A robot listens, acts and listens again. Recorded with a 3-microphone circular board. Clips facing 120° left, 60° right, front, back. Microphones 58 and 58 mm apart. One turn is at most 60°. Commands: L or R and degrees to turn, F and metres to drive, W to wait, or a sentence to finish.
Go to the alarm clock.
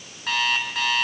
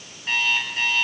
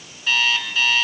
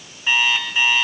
L60
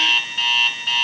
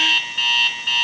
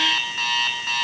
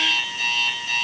L30
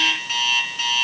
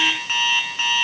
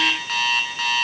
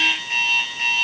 F1.0
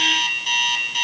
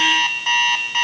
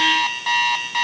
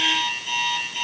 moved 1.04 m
R10
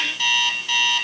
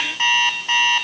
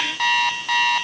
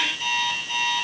F1.0
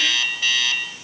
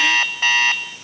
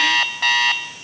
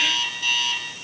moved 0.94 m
R15
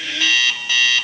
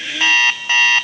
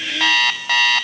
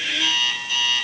F1.0
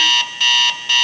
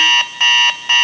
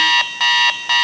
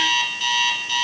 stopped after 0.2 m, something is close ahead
Arrived at the alarm clock, straight ahead.